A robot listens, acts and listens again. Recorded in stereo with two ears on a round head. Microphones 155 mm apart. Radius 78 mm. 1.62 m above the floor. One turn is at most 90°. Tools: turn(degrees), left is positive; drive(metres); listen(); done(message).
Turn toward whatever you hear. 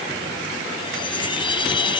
turn(degrees=25)
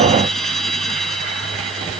done("Found it: a chime, straight ahead.")